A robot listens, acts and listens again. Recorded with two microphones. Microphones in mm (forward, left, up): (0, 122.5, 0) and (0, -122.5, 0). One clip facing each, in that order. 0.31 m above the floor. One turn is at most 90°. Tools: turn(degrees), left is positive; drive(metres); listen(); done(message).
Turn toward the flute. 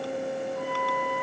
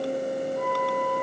turn(degrees=-20)
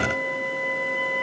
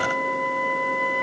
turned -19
done("Facing the flute.")